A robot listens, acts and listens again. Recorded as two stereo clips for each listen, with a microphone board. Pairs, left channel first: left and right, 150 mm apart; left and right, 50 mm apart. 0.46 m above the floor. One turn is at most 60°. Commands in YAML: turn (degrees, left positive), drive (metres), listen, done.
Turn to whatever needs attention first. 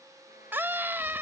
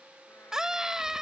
turn: -30
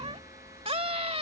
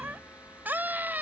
turn: -60
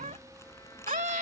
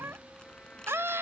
turn: -60
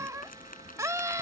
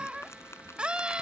turn: -25
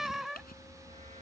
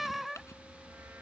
done: "Found it: a scream, straight ahead."